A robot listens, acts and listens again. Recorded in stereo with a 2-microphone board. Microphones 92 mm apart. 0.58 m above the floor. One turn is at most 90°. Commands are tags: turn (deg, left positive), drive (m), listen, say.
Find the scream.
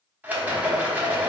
<listen/>
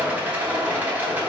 <listen/>
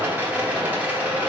<say>I can't make out a scream to turn to.</say>